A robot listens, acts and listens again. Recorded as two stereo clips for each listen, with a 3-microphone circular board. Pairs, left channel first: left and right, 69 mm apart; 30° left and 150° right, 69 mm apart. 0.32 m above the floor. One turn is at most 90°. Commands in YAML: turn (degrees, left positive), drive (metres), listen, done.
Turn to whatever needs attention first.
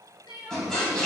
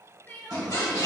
turn: 90
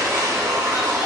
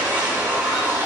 listen: true
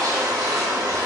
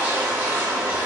listen: true
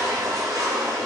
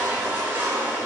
done: "I heard crying from this way, but can't make it out now."